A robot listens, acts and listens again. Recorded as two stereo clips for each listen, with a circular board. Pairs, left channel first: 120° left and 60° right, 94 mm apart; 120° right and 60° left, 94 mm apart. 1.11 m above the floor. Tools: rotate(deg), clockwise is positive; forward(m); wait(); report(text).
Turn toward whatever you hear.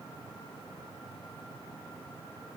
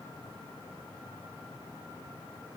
wait()
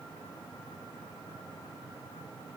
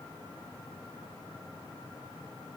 wait()
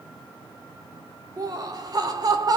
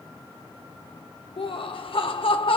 rotate(105)
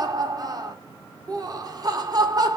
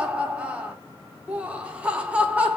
rotate(15)
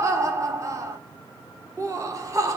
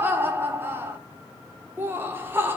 report("Found it: laughter, straight ahead, under 1 m away.")